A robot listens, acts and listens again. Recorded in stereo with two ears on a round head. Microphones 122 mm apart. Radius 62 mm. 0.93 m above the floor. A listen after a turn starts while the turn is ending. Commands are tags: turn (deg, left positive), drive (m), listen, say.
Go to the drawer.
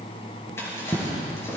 <turn deg="20"/>
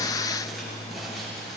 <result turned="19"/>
<listen/>
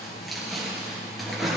<drive m="1.0"/>
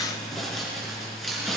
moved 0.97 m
<drive m="1.0"/>
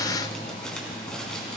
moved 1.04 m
<listen/>
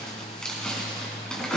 <drive m="1.0"/>
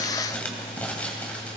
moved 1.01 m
<turn deg="15"/>
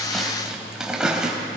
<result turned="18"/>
<drive m="1.0"/>
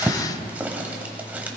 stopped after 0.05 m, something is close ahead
<turn deg="-10"/>
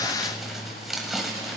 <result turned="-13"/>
<say>Arrived at the drawer, straight ahead.</say>